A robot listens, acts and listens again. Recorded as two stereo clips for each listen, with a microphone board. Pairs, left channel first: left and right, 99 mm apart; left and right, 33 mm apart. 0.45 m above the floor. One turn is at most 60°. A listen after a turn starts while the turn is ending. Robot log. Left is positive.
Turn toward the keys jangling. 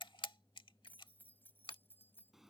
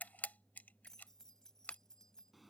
note: The keys jangling: about 20° left or 160° left.
cmd yaw +20
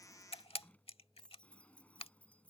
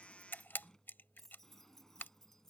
cmd yaw +30
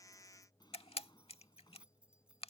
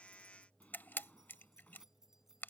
note: So it is at 10° right.
cmd yaw -10
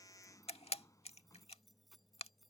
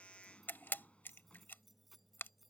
end: Found it: keys jangling, straight ahead.